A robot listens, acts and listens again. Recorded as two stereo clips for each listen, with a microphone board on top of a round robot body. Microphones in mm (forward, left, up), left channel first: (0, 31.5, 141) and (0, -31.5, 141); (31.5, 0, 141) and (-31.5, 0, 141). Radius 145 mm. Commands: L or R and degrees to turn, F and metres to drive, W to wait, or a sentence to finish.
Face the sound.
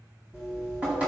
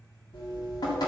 R20
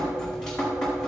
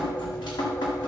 L10
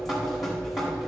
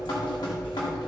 Found it: dripping, straight ahead, 1 to 2 m away.